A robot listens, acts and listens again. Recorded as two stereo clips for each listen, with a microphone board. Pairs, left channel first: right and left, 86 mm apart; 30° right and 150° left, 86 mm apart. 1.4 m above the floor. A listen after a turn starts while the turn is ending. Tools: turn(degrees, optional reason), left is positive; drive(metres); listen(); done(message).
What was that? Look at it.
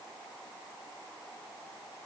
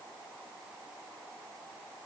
listen()
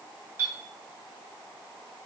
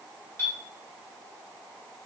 turn(degrees=30, reason="The clink: 30° left.")
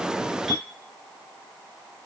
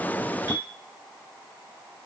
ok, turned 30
listen()
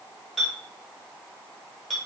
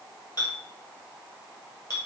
done("Found it: a clink, straight ahead.")